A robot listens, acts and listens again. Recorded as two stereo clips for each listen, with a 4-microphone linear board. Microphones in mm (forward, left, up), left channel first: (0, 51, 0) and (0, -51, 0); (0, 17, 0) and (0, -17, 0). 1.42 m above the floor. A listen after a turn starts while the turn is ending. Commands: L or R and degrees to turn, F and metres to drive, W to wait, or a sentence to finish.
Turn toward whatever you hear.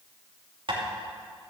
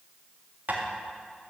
R55
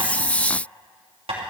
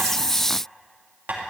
R70
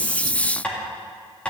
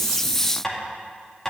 L10
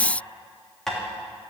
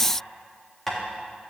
Found it: tapping, straight ahead.